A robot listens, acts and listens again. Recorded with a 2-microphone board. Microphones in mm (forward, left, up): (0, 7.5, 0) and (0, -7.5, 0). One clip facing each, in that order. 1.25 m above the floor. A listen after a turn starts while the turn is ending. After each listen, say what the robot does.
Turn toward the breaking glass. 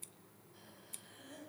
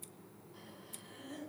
Keep listening.
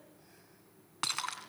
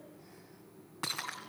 Turn 40° left.
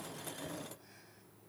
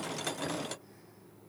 Keep listening.
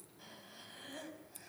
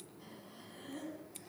I heard breaking glass, but can't make it out now. It was about straight ahead or 100° left.